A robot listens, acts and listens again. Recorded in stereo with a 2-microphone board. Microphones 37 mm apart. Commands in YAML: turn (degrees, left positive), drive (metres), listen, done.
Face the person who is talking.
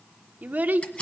turn: -50
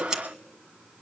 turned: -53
listen: true
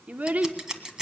turn: -65
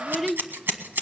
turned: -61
done: "Facing the child speaking, under 1 m away."